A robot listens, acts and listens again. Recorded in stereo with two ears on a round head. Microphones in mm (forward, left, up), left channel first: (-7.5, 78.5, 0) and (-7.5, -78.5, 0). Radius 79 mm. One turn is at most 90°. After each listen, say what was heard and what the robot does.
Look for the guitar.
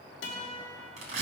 The guitar: about 75° left or 105° left. Turn 75° left.
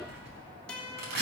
Facing the guitar.